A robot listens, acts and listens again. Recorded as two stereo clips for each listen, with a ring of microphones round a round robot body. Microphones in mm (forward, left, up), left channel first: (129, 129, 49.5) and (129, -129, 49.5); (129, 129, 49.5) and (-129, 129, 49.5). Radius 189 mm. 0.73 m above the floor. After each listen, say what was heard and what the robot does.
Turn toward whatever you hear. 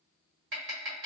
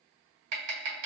The tapping: 150° right. Turn 150° right.
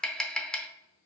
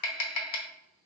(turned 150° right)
Found it: tapping, straight ahead.